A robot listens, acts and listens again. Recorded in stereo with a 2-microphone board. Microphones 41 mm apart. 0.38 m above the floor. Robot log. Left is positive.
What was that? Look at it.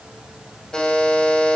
note: The buzzer: about 20° left or 160° left.
cmd yaw +20
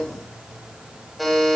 end: Found it: a buzzer, straight ahead.